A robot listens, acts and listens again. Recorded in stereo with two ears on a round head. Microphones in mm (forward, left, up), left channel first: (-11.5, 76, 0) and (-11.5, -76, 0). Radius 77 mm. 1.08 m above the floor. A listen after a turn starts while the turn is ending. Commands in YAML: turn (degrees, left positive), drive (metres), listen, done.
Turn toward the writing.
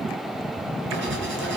turn: -90
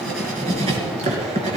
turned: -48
turn: -40
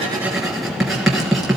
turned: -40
done: "Facing the writing."